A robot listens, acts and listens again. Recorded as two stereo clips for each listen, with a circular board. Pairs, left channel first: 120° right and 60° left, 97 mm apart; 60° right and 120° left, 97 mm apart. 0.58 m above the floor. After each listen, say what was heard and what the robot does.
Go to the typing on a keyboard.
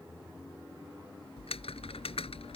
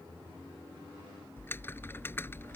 The typing on a keyboard: 125° right. Turn 125° right.
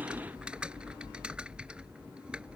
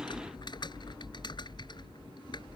The typing on a keyboard is now 20° right. Turn 20° right.
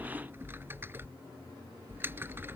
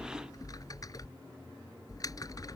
The typing on a keyboard is now 10° right. Turn 10° right.
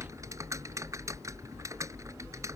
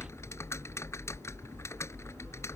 Drive 1.0 m forward.
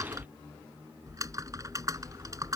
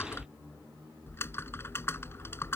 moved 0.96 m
Drive 1.0 m forward.
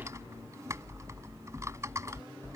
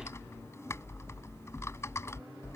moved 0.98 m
Drive 1.0 m forward.
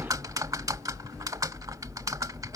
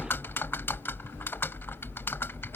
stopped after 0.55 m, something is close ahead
I am next to the typing on a keyboard.